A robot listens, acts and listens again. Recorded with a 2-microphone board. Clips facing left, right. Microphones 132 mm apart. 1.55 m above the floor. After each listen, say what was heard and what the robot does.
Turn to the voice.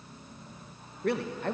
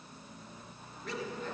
Turn 90° left.
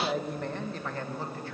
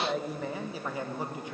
So it is at 20° right. Turn 20° right.
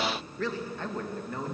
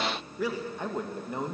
The man speaking is now 25° right. Turn 25° right.
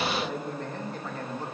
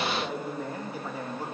The man speaking is now 10° right. Turn 10° right.
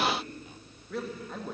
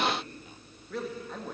Found it: a man speaking, straight ahead, 2 to 4 m away.